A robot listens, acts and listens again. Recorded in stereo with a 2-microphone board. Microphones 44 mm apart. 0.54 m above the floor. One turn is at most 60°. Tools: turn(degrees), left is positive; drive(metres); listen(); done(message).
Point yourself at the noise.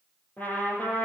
turn(degrees=40)
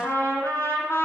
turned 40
turn(degrees=60)
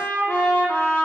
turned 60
turn(degrees=45)
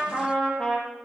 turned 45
turn(degrees=20)
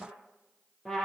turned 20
turn(degrees=10)
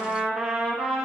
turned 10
done("Facing the trumpet, over 4 m away.")